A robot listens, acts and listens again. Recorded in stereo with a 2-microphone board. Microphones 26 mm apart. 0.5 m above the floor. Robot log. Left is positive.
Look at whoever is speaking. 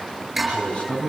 note: The man speaking: about 50° left or 130° left.
cmd yaw +50
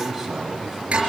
end: Found it: a man speaking, straight ahead, 2 to 4 m away.